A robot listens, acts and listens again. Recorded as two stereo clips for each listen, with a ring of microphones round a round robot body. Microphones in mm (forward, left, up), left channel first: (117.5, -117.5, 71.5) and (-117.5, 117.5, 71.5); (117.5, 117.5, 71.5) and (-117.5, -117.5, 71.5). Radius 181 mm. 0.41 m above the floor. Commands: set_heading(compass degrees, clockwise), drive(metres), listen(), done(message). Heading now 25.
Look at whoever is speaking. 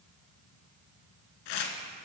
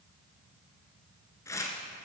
listen()
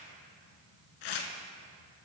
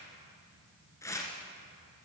listen()
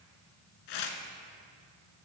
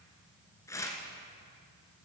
done("I can't make out anyone speaking to turn to.")